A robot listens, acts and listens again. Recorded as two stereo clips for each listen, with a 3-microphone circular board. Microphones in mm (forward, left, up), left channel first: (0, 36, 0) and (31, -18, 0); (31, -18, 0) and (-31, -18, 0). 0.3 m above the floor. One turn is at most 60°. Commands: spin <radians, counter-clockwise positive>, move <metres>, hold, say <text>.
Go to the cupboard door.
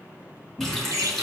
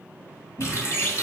move 1.0
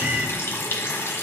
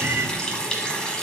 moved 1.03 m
hold
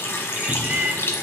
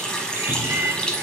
hold
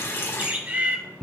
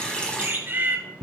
move 1.0
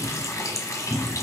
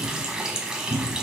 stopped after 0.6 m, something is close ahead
say I am next to the cupboard door.